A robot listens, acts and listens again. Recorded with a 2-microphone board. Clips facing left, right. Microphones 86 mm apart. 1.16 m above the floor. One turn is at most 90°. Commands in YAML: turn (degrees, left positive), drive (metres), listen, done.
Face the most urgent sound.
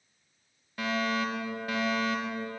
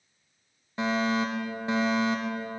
turn: -25
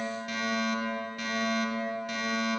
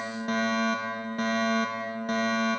turn: -90
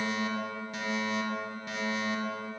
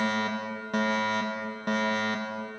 turn: -70
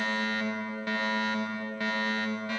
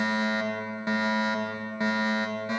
turn: -25
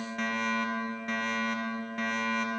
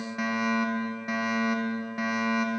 turn: -10
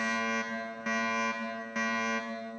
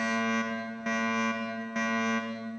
done: "Found it: a fire alarm, straight ahead."